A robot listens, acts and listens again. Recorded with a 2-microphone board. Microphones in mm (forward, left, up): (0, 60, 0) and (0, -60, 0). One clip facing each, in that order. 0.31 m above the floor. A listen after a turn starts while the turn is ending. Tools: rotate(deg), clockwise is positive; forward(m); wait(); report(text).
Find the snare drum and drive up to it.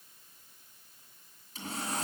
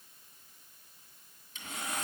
wait()
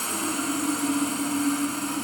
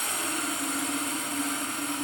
wait()
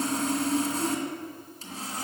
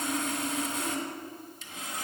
report("I can't make out a snare drum, only sawing.")